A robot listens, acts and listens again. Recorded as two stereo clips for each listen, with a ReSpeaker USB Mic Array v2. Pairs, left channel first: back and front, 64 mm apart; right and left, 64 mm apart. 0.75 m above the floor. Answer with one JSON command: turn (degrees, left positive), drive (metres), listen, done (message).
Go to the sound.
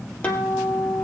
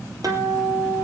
{"turn": 110}
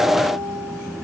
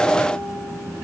{"listen": true}
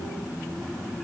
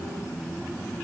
{"listen": true}
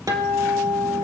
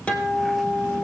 {"turn": -20}
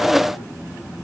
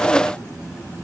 {"listen": true}
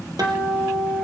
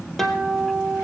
{"drive": 1.0}
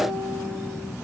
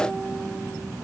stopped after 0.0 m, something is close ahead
{"listen": true}
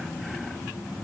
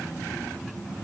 {"listen": true}
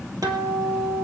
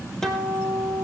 {"done": "Blocked. The guitar is further on, straight ahead."}